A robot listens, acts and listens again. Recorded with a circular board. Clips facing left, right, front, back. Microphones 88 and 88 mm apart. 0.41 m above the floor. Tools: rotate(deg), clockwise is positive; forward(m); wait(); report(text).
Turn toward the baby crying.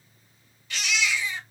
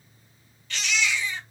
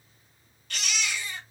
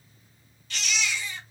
rotate(-15)
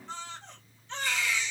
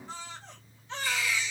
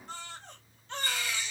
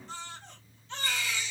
report("Found it: a baby crying, straight ahead, 1 to 2 m away.")